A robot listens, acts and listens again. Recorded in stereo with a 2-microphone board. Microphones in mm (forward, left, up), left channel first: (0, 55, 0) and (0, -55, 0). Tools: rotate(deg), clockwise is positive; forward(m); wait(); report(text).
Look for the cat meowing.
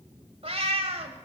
rotate(60)
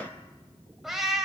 report("Facing the cat meowing, 1 to 2 m away.")